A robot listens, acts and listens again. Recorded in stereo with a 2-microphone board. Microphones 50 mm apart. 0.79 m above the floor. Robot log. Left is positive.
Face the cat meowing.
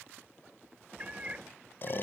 note: The cat meowing: about 25° right or 155° right.
cmd yaw -25
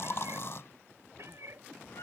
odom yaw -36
note: So it is at 120° right.
cmd yaw -120
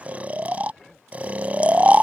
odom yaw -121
cmd idle
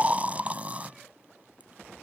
cmd idle
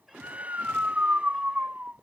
end: I heard a cat meowing from this way, but can't make it out now.